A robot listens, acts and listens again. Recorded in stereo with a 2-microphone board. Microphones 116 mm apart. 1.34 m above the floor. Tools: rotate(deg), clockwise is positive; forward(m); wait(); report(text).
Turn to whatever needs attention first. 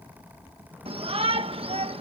rotate(60)
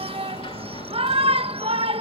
rotate(60)
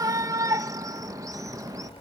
rotate(30)
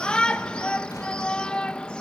rotate(-10)
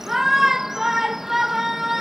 report("Facing the shout.")